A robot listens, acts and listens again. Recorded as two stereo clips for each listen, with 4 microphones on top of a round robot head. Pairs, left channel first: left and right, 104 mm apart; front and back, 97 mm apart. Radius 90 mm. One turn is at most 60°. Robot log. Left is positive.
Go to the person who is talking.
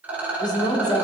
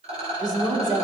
note: The woman speaking: 135° left.
cmd yaw +60
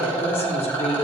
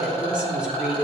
note: The woman speaking is now 100° left.
cmd yaw +60
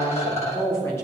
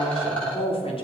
note: The woman speaking is now 20° left.
cmd yaw +20
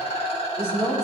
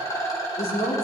cmd fwd 1.0
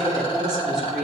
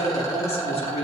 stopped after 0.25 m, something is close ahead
end: Something is in my way. I am facing the woman speaking but have not reached it.